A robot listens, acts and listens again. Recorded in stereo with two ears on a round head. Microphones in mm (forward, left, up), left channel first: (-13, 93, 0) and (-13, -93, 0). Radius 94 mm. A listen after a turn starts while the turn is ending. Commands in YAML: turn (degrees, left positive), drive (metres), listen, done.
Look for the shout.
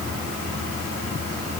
listen: true
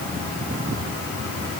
listen: true
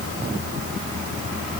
done: "I can't make out a shout."